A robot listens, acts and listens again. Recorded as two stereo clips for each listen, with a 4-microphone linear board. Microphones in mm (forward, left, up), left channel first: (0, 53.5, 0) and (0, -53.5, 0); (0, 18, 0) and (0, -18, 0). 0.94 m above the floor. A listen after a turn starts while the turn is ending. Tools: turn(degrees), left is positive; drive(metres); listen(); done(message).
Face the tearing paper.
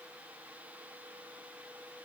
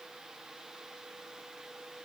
listen()
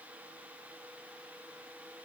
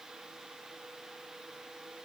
listen()
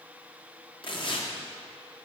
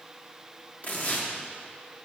turn(degrees=50)
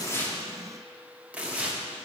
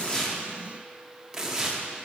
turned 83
turn(degrees=-15)
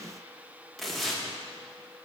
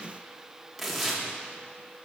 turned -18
done("Found it: tearing paper, straight ahead.")